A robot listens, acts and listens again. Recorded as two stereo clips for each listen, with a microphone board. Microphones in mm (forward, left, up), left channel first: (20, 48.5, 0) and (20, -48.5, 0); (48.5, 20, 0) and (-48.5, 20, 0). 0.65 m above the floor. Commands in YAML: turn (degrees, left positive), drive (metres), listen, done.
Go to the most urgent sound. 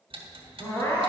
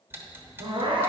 turn: 145
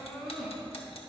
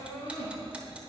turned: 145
drive: 1.0
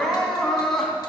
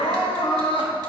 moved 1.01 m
drive: 1.0
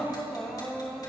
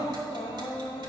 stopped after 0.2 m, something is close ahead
done: "Arrived at the crying, straight ahead."